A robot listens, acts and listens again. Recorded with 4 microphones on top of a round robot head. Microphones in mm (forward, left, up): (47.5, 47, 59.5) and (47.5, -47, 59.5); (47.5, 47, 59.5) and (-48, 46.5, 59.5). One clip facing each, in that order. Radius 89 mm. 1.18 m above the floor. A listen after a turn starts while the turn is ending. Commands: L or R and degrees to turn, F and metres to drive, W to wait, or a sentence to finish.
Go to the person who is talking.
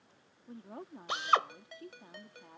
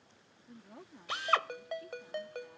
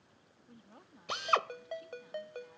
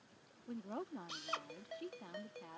L150
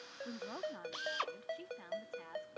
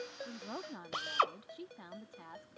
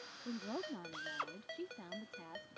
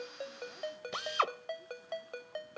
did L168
R15
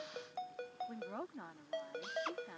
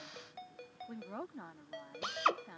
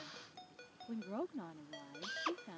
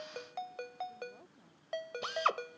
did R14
F1.0
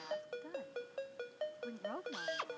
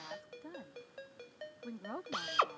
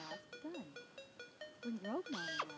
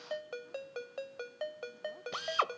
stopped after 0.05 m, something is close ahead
Something is in my way. I am facing the woman speaking but have not reached it.